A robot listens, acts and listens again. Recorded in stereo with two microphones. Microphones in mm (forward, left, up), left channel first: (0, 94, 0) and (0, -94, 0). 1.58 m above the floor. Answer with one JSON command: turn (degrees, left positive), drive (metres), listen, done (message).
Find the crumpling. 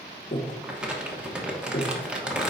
{"turn": -30}
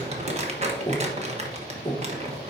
{"turn": -140}
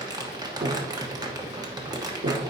{"turn": -20}
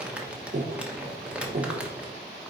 {"done": "Facing the crumpling, 1 to 2 m away."}